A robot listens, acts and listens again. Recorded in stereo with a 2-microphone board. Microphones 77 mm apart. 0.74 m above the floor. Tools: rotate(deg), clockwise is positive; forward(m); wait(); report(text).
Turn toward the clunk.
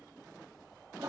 wait()
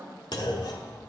rotate(-60)
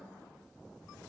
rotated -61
wait()
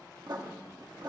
report("I heard a clunk, but can't make it out now. It was about straight ahead or 60° left.")